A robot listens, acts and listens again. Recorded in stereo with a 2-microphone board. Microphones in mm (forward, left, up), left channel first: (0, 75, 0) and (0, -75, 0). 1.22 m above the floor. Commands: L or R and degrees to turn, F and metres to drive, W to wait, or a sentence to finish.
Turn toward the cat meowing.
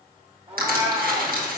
R50
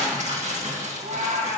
R65
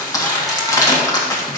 W
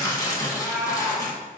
L10
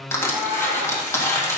Facing the cat meowing, over 4 m away.